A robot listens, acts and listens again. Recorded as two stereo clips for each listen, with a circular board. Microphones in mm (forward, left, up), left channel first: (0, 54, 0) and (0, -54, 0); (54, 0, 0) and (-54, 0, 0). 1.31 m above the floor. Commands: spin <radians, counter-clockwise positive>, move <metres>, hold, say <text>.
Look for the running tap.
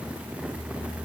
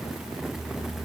hold
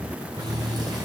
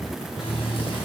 spin -0.61
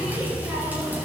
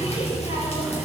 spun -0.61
spin -0.26
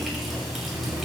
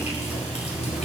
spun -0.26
say Found it: a running tap, straight ahead.